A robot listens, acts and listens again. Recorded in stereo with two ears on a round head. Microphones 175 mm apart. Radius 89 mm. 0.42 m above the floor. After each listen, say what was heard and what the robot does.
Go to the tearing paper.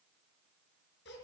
Keep listening.
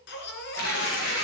Turn 90° left.
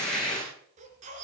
Drive 1.0 m forward.
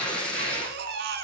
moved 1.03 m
Drive 1.0 m forward.
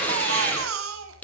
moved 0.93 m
The tearing paper is now 10° left. Turn 10° left.
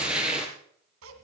Drive 1.0 m forward.
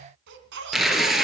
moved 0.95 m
Drive 1.0 m forward.
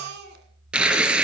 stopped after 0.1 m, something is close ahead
Arrived at the tearing paper, straight ahead.